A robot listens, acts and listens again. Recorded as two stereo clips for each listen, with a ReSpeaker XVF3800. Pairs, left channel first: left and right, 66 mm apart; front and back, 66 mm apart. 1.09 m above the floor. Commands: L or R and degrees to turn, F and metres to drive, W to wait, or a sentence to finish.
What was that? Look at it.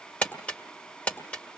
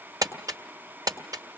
L160
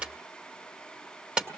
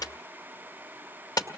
R15
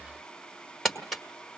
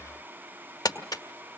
Found it: crumpling, straight ahead.